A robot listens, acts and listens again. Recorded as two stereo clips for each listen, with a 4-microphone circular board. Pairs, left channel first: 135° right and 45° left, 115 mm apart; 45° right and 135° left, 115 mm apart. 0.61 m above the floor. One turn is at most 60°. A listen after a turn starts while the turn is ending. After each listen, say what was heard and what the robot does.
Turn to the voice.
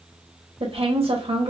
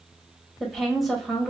The woman speaking: 45° left. Turn 45° left.
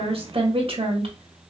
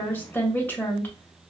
The woman speaking is now 25° left. Turn 25° left.
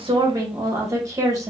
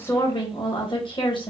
The woman speaking is now 10° right. Turn 10° right.
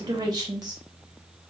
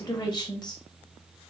Facing the woman speaking.